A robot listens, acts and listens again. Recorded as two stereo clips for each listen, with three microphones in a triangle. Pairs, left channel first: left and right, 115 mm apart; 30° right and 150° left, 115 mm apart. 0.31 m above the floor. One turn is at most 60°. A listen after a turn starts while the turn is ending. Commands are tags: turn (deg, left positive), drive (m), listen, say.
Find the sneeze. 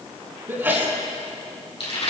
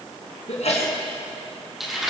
<turn deg="-20"/>
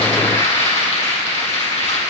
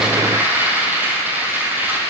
<say>I heard a sneeze from this way, but can't make it out now.</say>